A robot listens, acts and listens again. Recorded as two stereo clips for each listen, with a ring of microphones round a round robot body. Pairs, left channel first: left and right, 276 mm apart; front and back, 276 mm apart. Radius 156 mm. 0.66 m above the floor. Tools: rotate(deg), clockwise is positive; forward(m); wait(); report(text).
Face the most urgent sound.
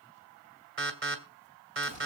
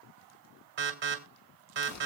rotate(135)
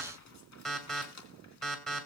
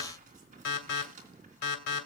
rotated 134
report("Found it: an alarm, straight ahead.")